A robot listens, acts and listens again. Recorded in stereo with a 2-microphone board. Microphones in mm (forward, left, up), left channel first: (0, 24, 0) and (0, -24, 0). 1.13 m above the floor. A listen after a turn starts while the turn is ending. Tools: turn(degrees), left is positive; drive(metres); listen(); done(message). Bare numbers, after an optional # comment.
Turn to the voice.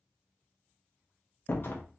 listen()
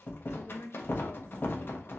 # The woman speaking: about 65° left or 115° left.
turn(65)
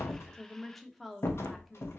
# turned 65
done("Found it: a woman speaking, straight ahead, under 1 m away.")